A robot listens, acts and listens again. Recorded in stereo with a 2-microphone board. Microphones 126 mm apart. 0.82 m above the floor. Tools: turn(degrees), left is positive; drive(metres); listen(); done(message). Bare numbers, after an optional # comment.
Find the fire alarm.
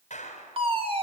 # The fire alarm: about 45° right or 135° right.
turn(-45)
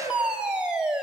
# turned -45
# So it is at 10° right.
turn(-10)
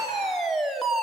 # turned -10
done("Facing the fire alarm, 2 to 4 m away.")